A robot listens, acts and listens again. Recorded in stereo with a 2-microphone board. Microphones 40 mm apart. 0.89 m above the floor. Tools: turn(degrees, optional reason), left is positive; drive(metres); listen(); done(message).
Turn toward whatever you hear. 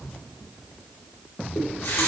turn(degrees=75, reason="The running tap: about 75° left or 105° left.")
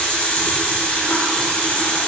turn(degrees=30, reason="So it is at 30° left.")
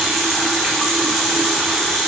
done("Facing the running tap.")